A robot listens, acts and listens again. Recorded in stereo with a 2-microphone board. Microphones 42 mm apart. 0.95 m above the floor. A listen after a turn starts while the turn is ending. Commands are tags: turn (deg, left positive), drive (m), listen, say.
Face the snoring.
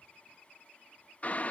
<listen/>
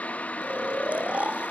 <turn deg="-35"/>
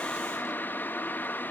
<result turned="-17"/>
<listen/>
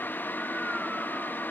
<listen/>
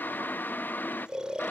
<turn deg="-20"/>
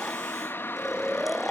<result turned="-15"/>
<turn deg="-10"/>
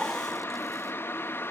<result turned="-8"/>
<listen/>
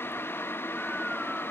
<listen/>
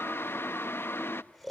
<say>Facing the snoring, 1 to 2 m away.</say>